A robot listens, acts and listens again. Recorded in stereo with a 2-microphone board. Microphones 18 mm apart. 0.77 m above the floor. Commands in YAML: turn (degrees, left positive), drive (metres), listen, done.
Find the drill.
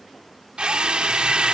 turn: -70
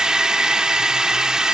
turn: -40
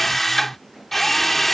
turn: 15
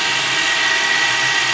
done: "Facing the drill."